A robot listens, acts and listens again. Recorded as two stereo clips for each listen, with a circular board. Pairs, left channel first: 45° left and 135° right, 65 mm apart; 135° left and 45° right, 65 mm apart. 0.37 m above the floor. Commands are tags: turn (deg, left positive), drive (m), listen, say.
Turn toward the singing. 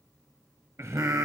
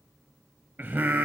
<turn deg="-100"/>
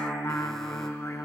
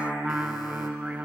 <turn deg="15"/>
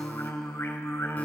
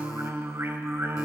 <say>Found it: singing, straight ahead, 1 to 2 m away.</say>